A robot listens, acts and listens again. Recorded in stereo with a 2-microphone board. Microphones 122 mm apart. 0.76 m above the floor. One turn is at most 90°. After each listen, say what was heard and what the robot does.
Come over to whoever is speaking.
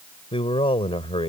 The man speaking: about 55° left or 125° left. Turn 55° left.
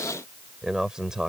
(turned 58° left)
Drive 1.0 m forward.
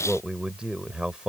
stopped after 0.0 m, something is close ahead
Blocked. The man speaking is further on, straight ahead.